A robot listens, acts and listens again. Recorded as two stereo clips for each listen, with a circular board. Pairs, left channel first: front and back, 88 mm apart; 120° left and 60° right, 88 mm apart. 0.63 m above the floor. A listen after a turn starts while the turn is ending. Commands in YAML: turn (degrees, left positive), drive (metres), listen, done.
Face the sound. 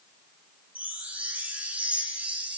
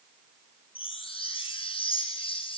turn: 105
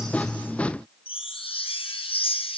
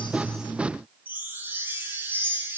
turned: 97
turn: 10
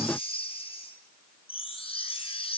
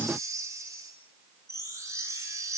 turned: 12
done: "Found it: a chime, straight ahead."